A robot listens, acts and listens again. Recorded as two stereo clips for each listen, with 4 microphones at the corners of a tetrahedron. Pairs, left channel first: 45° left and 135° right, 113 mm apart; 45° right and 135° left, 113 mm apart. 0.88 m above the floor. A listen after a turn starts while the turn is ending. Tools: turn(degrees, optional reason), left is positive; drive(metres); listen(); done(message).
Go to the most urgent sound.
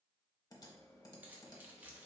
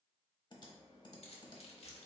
listen()
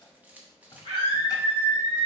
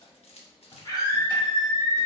turn(degrees=-100, reason="The scream: 100° right.")
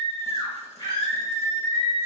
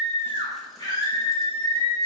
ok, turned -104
drive(metres=1.0)
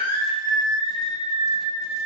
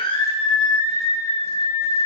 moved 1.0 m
drive(metres=1.0)
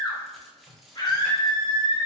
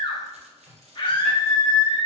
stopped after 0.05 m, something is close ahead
done("Arrived at the scream, straight ahead.")